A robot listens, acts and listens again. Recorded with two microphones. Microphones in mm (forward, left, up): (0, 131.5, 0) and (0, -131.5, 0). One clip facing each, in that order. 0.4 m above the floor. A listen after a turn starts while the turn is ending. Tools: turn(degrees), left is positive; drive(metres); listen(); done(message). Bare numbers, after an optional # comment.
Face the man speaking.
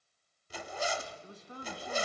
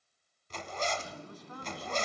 # The man speaking: about 30° left or 150° left.
turn(30)
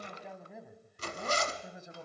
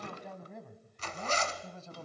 # The man speaking: about 20° left or 160° left.
turn(20)
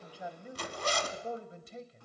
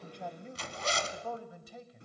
# The man speaking: about 30° left or 150° left.
turn(30)
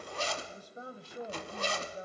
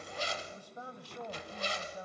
# The man speaking: about 30° left or 150° left.
turn(30)
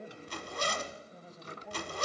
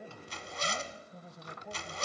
done("Facing the man speaking.")